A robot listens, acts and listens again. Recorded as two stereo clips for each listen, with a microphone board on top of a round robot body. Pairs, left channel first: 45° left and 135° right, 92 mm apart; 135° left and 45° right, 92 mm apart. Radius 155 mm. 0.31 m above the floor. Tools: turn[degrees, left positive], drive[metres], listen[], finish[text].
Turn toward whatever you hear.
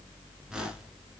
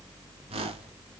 Thought: The whoosh: 55° right.
Action: turn[-55]
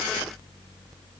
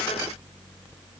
Action: listen[]
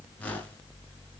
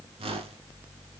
Thought: The whoosh is now 30° right.
Action: turn[-30]
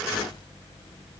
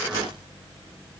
Action: listen[]
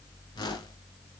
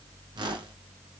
Action: finish[Found it: a whoosh, straight ahead, 1 to 2 m away.]